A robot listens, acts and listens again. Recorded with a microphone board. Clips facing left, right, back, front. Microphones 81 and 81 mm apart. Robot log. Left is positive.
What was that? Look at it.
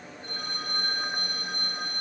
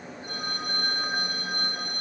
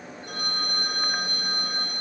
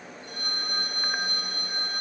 note: The phone ringing: 165° right.
cmd yaw -165
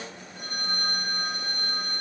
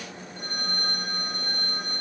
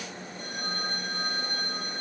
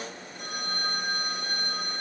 end: Facing the phone ringing, 2 to 4 m away.